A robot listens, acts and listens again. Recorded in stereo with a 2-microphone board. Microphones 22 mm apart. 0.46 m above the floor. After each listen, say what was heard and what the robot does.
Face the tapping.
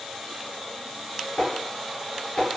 Turn 90° left.
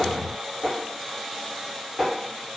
Facing the tapping, 1 to 2 m away.